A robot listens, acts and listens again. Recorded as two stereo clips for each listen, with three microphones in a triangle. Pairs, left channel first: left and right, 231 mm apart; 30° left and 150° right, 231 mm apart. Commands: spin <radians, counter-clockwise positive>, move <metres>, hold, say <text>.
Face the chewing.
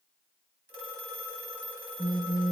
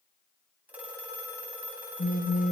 hold
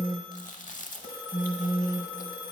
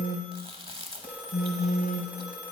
spin 2.62
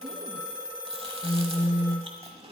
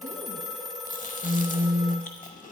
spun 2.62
spin -0.44
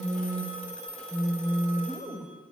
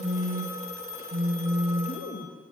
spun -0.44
say Facing the chewing.